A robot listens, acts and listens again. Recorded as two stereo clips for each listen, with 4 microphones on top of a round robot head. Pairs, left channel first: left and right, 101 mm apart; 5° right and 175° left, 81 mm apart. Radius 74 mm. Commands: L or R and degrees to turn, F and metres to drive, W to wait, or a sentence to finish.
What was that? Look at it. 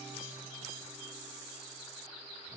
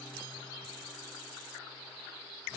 W
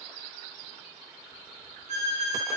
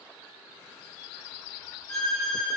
R90
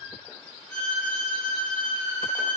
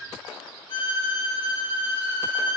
Found it: a violin, straight ahead, 2 to 4 m away.